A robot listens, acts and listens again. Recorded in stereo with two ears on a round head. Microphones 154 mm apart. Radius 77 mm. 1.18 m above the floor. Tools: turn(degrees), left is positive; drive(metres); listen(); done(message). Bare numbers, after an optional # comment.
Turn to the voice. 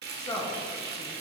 # The woman speaking: about 25° left or 155° left.
turn(25)
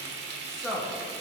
done("Facing the woman speaking.")